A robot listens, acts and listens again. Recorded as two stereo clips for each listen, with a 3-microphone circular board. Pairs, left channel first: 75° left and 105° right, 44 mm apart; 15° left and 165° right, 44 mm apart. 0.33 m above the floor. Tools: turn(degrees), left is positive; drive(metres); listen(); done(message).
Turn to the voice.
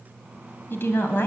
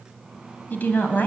turn(degrees=55)
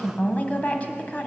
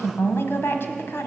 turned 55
turn(degrees=25)
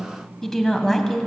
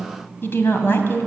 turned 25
done("Found it: a woman speaking, straight ahead, 1 to 2 m away.")